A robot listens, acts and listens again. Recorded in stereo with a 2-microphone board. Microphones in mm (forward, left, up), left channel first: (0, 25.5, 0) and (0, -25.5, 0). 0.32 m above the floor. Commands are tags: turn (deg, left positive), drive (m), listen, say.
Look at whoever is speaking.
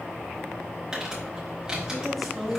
<turn deg="30"/>
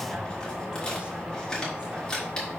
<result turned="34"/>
<listen/>
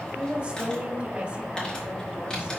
<turn deg="-30"/>
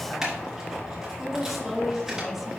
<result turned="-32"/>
<say>Facing the woman speaking, 1 to 2 m away.</say>